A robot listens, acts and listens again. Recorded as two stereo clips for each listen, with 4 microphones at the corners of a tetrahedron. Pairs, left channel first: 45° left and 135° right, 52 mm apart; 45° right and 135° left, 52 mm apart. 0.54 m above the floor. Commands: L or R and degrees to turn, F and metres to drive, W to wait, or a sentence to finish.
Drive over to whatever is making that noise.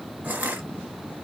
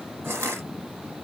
L165
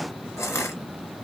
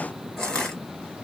L30
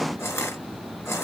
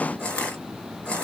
L25
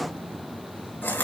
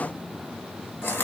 F1.0
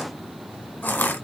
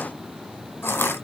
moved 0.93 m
F1.0
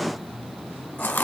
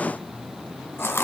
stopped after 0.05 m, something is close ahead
I am next to the crushing.